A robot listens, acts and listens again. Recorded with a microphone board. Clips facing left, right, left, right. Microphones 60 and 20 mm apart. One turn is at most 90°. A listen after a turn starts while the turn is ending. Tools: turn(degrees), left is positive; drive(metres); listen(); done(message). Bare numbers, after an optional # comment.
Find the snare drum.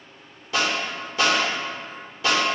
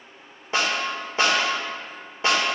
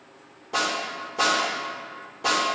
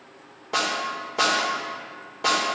# The snare drum: about 30° right or 150° right.
turn(-30)
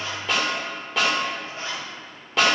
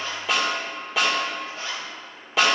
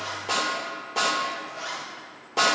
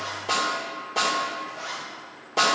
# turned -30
done("Facing the snare drum.")